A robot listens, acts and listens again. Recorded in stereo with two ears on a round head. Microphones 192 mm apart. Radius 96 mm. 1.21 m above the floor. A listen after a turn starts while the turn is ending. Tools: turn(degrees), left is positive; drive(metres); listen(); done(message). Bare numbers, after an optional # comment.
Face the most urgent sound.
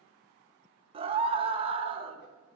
# The scream: about 25° right or 155° right.
turn(-25)
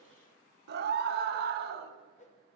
# So it is at 130° right.
turn(-130)
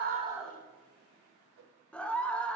done("Found it: a scream, straight ahead.")